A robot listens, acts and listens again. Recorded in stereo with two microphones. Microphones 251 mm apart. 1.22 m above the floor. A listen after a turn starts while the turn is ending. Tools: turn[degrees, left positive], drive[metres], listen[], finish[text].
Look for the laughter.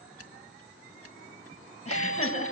Thought: The laughter: about 30° left or 150° left.
Action: turn[30]
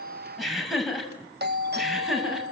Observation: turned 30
Action: finish[Facing the laughter.]